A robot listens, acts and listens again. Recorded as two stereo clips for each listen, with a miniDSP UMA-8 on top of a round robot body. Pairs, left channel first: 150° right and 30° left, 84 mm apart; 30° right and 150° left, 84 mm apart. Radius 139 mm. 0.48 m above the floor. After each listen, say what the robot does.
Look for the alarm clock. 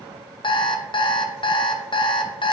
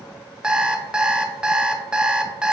Turn 130° right.
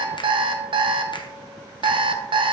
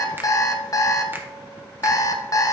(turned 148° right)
Turn 15° left.
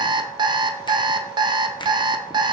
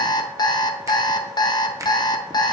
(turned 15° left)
Found it: an alarm clock, straight ahead.